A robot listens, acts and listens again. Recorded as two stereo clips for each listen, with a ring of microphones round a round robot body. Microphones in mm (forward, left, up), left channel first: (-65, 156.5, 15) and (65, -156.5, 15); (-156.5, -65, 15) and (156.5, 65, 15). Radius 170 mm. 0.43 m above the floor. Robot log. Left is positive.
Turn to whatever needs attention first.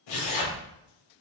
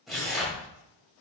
cmd idle
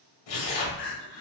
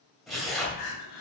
note: The crying: 170° left.
cmd yaw +170
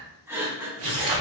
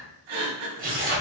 note: The crying is now 15° left.
cmd yaw +15
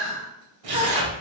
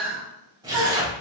end: Found it: crying, straight ahead, 1 to 2 m away.